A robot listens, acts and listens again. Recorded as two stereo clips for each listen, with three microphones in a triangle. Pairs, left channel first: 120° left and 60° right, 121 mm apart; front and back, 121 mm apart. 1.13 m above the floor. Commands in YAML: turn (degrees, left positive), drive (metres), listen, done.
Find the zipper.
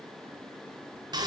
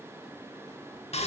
listen: true
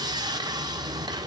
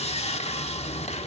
listen: true
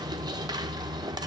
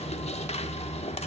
done: "I can't make out a zipper to turn to."